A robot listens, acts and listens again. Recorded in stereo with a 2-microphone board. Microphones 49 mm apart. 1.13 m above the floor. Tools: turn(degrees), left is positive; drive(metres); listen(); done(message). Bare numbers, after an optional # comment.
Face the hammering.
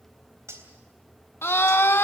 listen()
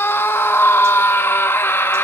listen()
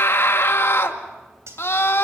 done("I can't make out hammering, only a scream and cutlery clinking.")